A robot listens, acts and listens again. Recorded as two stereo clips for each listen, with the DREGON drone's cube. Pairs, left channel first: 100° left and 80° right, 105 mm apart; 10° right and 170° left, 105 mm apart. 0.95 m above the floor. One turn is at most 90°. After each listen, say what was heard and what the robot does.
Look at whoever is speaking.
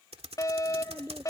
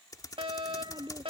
The child speaking: 145° right. Turn 90° right.
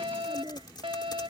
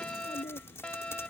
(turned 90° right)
The child speaking is now 25° right. Turn 25° right.
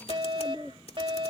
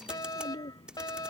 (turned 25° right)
The child speaking is now 10° left. Turn 10° left.
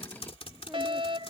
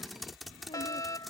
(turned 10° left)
Keep listening.
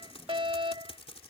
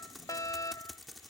Keep listening.
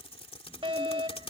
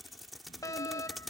Facing where the child speaking came from. I can't hear it now.